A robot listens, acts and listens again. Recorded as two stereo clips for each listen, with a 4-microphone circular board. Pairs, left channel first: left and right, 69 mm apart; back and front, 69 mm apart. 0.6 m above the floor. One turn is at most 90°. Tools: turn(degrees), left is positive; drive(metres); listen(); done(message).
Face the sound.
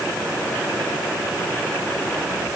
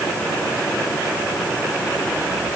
listen()
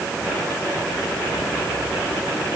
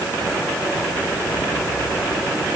listen()
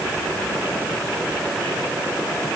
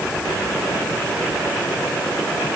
done("I can't make out anything to turn to.")